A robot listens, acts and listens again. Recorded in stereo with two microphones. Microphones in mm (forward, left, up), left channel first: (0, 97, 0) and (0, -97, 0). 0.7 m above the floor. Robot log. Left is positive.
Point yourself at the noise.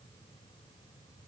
cmd idle
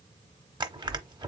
note: The crushing: about 25° right or 155° right.
cmd yaw -25
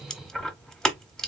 end: Facing the crushing, under 1 m away.